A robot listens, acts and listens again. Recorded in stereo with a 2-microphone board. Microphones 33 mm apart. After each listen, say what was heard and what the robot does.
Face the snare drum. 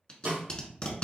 The snare drum: about 70° right or 110° right. Turn 70° right.
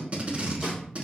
Keep listening.
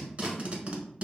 Keep listening.
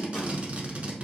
I heard a snare drum, but can't make it out now. It was about straight ahead or 40° right.